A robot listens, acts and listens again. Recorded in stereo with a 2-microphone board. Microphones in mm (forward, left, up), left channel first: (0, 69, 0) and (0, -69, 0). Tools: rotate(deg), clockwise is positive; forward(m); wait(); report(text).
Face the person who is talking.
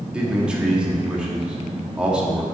rotate(30)
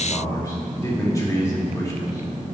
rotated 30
rotate(-25)
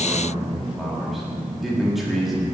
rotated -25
report("Found it: a man speaking, straight ahead.")